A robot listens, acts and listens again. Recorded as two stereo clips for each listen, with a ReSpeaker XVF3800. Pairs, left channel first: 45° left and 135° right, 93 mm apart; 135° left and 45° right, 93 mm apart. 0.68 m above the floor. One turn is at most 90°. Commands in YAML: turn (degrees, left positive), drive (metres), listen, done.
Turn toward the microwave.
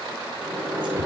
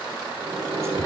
turn: -70
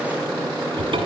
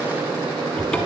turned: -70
turn: -25
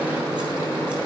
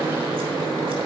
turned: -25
turn: -20
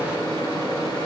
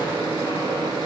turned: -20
done: "Facing the microwave."